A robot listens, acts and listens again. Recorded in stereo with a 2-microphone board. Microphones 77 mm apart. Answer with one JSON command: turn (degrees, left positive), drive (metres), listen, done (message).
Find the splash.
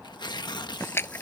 {"turn": 30}
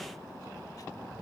{"listen": true}
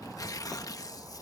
{"done": "I heard a splash, but can't make it out now. It was about straight ahead or 120° left."}